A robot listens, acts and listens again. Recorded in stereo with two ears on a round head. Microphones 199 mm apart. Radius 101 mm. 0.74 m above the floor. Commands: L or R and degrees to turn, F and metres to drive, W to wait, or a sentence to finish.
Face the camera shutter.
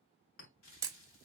R15
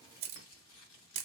R150
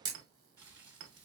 R20
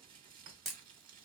Facing the camera shutter, under 1 m away.